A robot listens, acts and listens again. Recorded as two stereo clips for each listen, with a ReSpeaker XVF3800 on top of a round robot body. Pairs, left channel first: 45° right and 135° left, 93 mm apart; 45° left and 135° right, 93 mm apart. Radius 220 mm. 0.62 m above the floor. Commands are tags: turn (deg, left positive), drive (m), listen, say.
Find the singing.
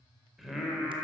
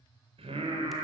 <turn deg="-140"/>
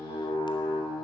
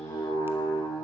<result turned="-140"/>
<turn deg="-10"/>
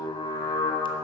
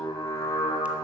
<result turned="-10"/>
<turn deg="-10"/>
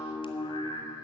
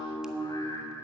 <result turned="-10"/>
<say>Found it: singing, straight ahead, 2 to 4 m away.</say>